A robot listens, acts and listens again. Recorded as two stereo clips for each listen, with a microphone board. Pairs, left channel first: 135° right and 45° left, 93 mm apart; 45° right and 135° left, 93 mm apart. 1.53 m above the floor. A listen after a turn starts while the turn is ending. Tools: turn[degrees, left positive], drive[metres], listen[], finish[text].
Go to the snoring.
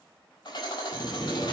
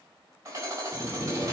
Thought: The snoring: 110° right.
Action: turn[-110]
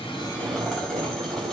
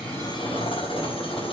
Thought: The snoring is now 10° left.
Action: turn[10]
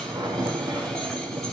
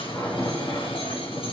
Action: drive[1.0]
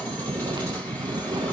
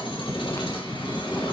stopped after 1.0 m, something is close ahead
Thought: The snoring is now 10° left.
Action: turn[10]
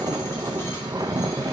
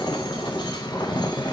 Action: finish[Arrived at the snoring, straight ahead.]